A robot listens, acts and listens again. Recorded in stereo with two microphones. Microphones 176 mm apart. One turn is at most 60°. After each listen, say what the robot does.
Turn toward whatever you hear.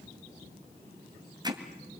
Turn 25° right.
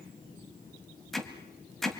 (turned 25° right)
Facing the hammering.